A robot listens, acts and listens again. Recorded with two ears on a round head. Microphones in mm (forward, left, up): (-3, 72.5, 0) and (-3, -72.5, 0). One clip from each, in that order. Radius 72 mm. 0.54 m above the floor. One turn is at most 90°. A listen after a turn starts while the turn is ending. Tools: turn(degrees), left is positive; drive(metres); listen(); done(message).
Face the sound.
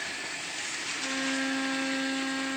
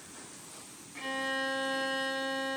turn(degrees=-65)
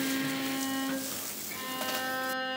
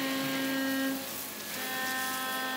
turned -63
done("Facing the violin.")